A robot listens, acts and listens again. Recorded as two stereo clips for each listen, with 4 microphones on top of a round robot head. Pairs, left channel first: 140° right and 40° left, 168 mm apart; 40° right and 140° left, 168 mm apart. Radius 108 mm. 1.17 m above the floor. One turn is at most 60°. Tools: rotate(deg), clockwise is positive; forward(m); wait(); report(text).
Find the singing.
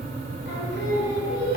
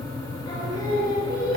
rotate(60)
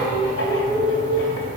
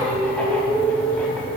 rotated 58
rotate(60)
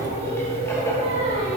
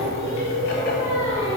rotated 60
rotate(15)
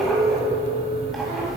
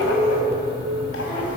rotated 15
report("Found it: singing, straight ahead, over 4 m away.")